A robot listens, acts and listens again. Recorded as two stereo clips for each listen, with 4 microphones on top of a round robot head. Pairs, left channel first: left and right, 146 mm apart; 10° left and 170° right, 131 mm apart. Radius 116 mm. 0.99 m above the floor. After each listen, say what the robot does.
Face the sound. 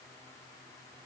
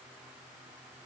Keep listening.
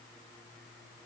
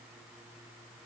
Keep listening.
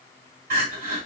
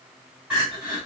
Turn 85° right.
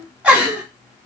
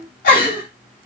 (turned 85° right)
Turn 10° right.
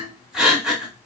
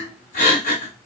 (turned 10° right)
Facing the crying.